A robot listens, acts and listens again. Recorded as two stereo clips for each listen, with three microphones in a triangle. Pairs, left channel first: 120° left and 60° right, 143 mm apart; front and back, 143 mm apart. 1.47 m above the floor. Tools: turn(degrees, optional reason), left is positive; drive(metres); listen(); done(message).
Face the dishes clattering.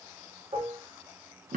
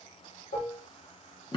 turn(degrees=-10, reason="The dishes clattering: 10° right.")
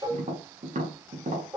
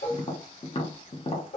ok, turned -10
done("Found it: dishes clattering, straight ahead, 1 to 2 m away.")